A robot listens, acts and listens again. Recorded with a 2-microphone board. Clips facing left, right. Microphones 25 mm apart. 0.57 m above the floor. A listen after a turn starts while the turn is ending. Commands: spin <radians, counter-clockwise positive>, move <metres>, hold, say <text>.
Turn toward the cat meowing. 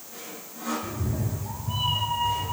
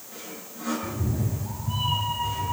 spin 0.52
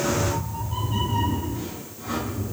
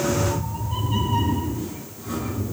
spin -0.26
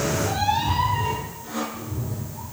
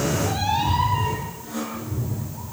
say Facing the cat meowing.